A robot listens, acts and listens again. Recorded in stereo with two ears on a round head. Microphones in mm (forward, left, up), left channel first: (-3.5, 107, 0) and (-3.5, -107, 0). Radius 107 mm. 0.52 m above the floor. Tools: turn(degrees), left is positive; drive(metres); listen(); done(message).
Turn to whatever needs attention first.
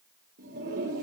listen()
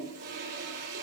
listen()
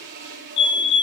turn(degrees=50)
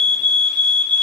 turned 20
turn(degrees=35)
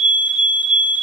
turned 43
done("Found it: a fire alarm, straight ahead.")